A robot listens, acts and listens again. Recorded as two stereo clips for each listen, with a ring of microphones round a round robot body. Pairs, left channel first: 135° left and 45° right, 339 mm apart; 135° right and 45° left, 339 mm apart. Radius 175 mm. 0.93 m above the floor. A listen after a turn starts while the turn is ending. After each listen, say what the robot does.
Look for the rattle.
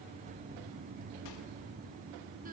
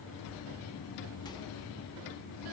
Keep listening.
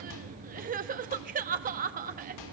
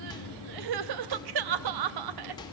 Keep listening.
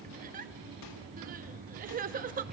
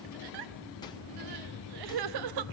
I can't make out a rattle to turn to.